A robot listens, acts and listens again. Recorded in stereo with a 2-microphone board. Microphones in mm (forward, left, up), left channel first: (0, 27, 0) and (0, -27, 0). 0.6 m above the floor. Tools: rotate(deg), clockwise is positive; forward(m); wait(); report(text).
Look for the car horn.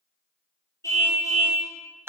rotate(-60)
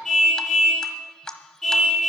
report("Found it: a car horn, straight ahead.")